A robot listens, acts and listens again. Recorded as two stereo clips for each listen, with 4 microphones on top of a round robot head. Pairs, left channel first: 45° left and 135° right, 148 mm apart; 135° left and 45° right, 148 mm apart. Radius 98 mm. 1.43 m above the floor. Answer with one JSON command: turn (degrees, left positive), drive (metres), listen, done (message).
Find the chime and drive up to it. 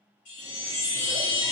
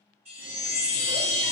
{"turn": 10}
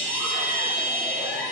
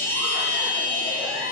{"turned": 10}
{"drive": 1.0}
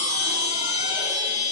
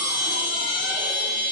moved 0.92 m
{"turn": -10}
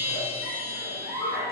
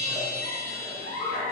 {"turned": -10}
{"drive": 1.0}
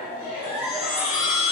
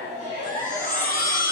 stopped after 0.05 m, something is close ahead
{"turn": 10}
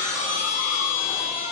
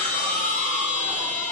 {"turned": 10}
{"done": "Arrived at the chime, straight ahead."}